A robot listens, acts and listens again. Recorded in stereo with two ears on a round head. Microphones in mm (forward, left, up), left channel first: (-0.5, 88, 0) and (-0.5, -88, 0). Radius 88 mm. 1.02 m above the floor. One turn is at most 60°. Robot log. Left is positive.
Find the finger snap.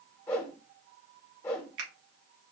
note: The finger snap: about 65° right or 115° right.
cmd yaw -60
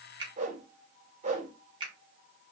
note: So it is at 25° right.
cmd yaw -25
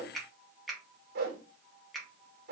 end: Found it: a finger snap, straight ahead, 1 to 2 m away.